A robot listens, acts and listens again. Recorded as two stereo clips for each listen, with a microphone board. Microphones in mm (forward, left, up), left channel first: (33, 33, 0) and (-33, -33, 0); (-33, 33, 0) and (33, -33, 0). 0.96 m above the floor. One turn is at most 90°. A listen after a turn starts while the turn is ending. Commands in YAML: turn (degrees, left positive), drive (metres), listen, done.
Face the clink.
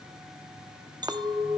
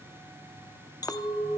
turn: -90
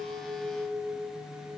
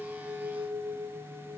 turn: -75
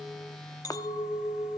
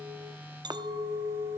done: "Found it: a clink, straight ahead."